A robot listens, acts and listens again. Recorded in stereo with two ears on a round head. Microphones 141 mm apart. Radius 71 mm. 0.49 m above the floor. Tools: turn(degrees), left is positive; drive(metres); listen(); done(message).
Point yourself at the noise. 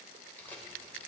turn(degrees=30)
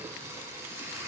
turn(degrees=-20)
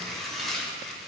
done("Found it: tearing paper, straight ahead, 1 to 2 m away.")